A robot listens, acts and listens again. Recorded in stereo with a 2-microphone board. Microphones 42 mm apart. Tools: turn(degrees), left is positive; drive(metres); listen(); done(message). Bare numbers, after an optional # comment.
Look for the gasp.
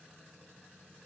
listen()
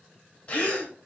# The gasp: about 35° left or 145° left.
turn(35)
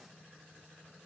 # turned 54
listen()
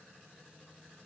done("I heard a gasp, but can't make it out now. It was about 20° right or 90° left.")